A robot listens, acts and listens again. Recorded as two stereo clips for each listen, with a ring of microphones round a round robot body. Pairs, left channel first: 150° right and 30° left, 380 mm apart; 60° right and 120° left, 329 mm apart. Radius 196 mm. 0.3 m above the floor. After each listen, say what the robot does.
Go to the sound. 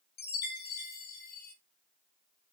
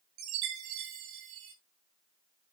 Turn 145° left.
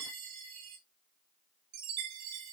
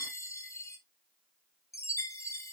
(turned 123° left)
Turn 20° left.
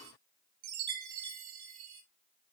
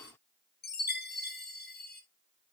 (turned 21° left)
Drive 1.0 m forward.
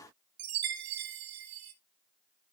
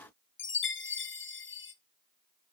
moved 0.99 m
Drive 1.0 m forward.
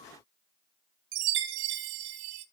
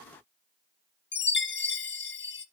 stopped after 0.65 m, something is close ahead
Arrived at the chime, straight ahead.